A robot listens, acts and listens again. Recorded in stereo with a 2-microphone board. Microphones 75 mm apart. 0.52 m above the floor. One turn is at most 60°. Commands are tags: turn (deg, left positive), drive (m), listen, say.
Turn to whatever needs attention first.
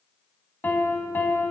<listen/>
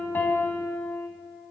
<listen/>
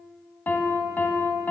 <say>I can't make out anything urgent to turn to.</say>